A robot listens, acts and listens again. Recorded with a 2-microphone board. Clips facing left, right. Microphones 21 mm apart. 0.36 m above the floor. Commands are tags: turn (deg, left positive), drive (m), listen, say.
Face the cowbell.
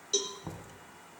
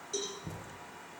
<turn deg="45"/>
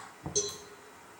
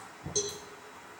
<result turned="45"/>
<say>Facing the cowbell.</say>